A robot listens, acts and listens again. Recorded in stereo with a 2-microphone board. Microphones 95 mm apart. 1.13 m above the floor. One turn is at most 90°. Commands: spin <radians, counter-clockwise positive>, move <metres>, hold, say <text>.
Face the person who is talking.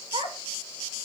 spin -1.22
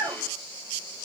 spin -0.87
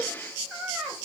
say Facing the child speaking.